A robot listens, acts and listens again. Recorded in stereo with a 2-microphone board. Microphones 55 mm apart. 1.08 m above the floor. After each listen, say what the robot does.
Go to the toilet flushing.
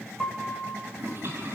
Turn 45° right.
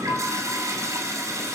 Turn 85° right.
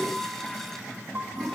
Drive 1.0 m forward.
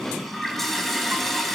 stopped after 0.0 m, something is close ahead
Blocked. The toilet flushing is further on, straight ahead.